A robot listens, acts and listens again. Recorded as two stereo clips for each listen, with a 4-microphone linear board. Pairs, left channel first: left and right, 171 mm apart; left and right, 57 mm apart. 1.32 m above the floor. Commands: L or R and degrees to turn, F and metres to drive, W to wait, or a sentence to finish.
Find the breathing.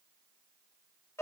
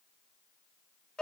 W
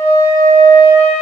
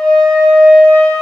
W
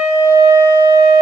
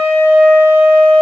I can't make out breathing to turn to.